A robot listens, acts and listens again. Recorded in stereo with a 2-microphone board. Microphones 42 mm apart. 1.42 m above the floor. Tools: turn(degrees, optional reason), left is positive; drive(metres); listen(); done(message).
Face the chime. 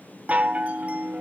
turn(degrees=-35, reason="The chime: about 35° right or 145° right.")
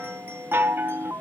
turn(degrees=-110, reason="So it is at 110° right.")
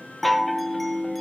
done("Found it: a chime, straight ahead.")